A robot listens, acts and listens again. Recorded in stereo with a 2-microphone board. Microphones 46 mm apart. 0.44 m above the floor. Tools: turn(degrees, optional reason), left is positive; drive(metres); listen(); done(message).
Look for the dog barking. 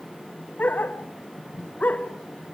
turn(degrees=35, reason="The dog barking: about 35° left or 145° left.")
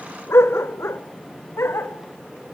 turn(degrees=115, reason="So it is at 115° left.")
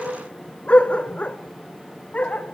turn(degrees=30, reason="The dog barking is now 30° left.")
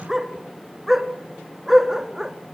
done("Facing the dog barking.")